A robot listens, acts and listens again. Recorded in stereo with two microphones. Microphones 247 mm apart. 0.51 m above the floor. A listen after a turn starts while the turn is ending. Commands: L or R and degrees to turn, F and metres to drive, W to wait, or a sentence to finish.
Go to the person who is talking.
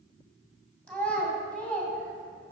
L30
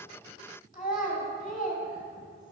L145
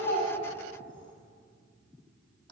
W
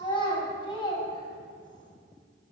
L20
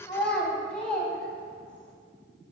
F1.0
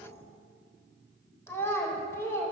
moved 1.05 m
L10
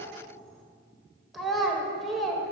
F1.0
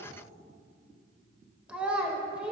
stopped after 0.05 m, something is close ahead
I am next to the child speaking.